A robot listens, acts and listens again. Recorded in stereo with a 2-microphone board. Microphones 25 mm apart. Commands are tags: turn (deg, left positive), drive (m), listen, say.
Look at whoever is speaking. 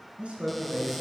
<turn deg="-55"/>
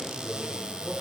<turn deg="-70"/>
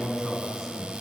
<say>Found it: a man speaking, straight ahead.</say>